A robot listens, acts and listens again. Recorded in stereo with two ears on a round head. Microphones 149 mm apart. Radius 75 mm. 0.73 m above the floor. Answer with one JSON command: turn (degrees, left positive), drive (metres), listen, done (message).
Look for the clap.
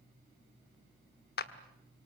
{"turn": 60}
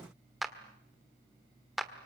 {"done": "Found it: a clap, straight ahead, 1 to 2 m away."}